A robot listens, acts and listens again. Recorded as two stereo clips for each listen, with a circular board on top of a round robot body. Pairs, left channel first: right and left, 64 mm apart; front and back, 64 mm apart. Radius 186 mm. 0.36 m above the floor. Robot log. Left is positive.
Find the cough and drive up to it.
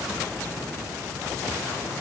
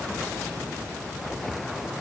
cmd idle
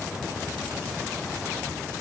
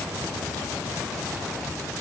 cmd idle
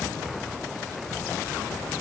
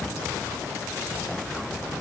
end: I can't make out a cough.